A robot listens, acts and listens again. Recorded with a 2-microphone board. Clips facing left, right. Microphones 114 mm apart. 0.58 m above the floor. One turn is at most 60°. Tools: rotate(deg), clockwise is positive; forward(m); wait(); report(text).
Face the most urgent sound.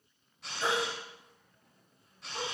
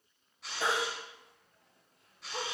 rotate(60)
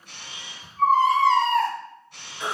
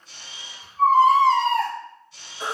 rotate(35)
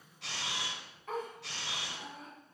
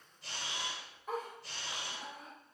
wait()
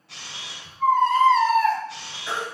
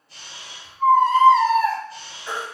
rotate(10)
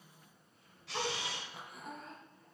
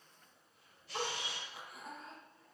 wait()
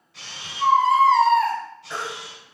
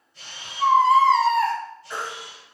report("Found it: a baby crying, straight ahead, over 4 m away.")